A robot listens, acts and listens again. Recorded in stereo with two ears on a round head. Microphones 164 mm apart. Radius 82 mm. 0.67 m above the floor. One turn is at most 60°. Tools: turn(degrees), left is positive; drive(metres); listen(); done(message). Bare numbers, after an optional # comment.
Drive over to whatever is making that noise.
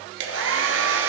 turn(-60)
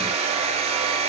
# So it is at 35° right.
turn(-35)
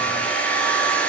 drive(1.0)
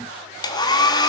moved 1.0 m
# The hair dryer is now 25° left.
turn(25)
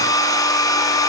# The hair dryer is now 20° left.
turn(20)
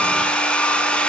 drive(1.0)
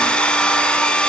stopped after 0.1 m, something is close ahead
done("I am next to the hair dryer.")